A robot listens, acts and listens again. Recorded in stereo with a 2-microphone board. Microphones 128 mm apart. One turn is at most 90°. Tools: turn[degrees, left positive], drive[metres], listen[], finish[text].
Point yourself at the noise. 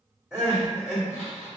Action: turn[-30]
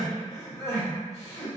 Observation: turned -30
Thought: So it is at 25° left.
Action: turn[25]
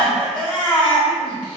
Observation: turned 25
Thought: The crying is now 10° left.
Action: turn[10]
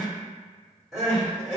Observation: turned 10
Action: finish[Facing the crying, 1 to 2 m away.]